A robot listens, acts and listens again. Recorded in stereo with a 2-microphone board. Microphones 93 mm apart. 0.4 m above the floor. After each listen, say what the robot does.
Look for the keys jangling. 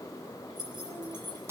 Turn 50° right.
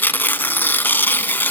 Keep listening.
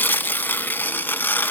Keep listening.
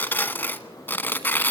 I heard keys jangling, but can't make it out now. It was about straight ahead or 80° right.